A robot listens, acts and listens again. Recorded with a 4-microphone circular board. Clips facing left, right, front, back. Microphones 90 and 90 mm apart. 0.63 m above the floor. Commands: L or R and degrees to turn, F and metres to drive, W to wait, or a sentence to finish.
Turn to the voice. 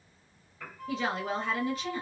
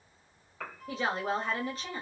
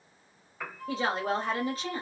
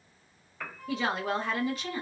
R45
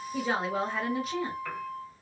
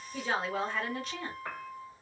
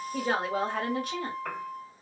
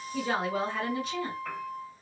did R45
L10
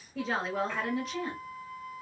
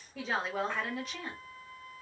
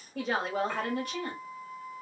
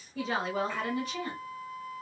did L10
Facing the woman speaking, 1 to 2 m away.